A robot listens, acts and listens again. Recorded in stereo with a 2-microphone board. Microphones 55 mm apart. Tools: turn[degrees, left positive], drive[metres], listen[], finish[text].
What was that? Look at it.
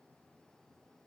Action: listen[]
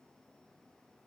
Action: listen[]
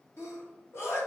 Thought: The sneeze: about 55° left or 125° left.
Action: turn[55]
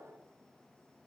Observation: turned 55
Action: listen[]
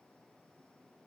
Action: finish[I heard a sneeze, but can't make it out now. It was about straight ahead or 70° left.]